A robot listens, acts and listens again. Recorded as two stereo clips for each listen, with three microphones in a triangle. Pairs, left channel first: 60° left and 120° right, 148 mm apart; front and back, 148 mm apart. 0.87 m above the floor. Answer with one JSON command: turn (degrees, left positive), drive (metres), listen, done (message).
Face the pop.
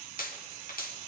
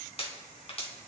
{"turn": 50}
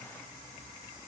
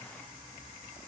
{"done": "Facing where the pop came from. I can't hear it now."}